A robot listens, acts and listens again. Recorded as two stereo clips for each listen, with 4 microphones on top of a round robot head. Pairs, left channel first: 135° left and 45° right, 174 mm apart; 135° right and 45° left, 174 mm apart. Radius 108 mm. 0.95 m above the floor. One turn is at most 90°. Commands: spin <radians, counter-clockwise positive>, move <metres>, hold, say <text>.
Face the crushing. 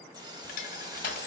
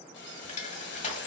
spin 1.57
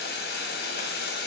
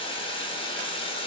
spin 1.48
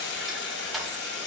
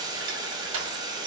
spin 0.79
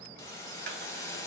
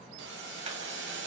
hold
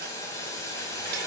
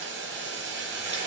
hold
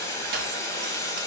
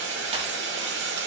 say I heard crushing from this way, but can't make it out now.